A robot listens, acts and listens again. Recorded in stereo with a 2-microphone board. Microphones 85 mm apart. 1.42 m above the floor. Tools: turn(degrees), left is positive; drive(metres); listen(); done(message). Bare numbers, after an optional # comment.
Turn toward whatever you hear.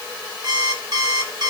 # The alarm clock: about 55° right or 125° right.
turn(-55)
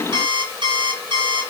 # So it is at 70° right.
turn(-70)
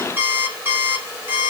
# The alarm clock is now 25° right.
turn(-25)
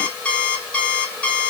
# The alarm clock is now 15° left.
turn(15)
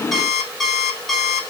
done("Facing the alarm clock.")